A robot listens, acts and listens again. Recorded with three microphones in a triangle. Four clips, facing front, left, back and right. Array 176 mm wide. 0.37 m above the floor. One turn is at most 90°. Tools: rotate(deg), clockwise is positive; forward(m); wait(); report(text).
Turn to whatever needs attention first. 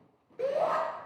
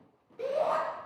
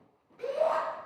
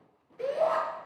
rotate(-20)
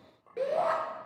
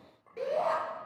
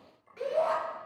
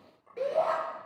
report("Found it: a shout, straight ahead.")